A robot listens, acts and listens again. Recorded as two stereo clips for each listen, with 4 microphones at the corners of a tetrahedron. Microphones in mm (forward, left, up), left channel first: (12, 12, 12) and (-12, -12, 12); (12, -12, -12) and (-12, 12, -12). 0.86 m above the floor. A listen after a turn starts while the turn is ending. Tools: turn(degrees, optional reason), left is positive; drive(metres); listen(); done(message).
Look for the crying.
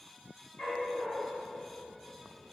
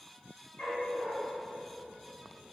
listen()
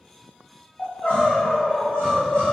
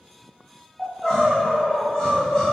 turn(degrees=35, reason="The crying: 35° left.")
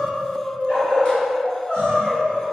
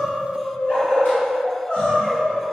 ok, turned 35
done("Facing the crying.")